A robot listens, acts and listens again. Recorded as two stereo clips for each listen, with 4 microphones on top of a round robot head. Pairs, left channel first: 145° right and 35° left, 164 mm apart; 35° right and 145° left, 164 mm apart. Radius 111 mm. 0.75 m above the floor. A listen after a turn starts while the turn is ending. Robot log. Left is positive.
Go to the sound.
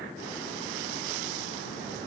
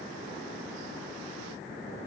cmd idle
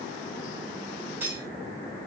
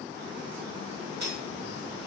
note: The cutlery clinking: 115° left.
cmd yaw +115
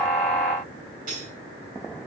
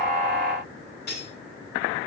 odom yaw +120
cmd fwd 1.0
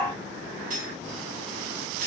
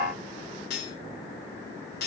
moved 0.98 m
cmd fwd 1.0
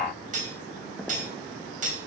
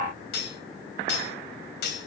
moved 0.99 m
note: The cutlery clinking is now 10° right.
cmd yaw -10
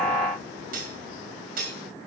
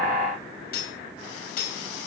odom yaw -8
cmd fwd 1.0
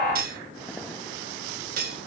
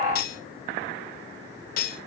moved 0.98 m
cmd fwd 1.0
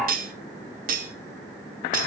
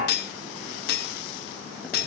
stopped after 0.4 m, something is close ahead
end: Arrived at the cutlery clinking, straight ahead.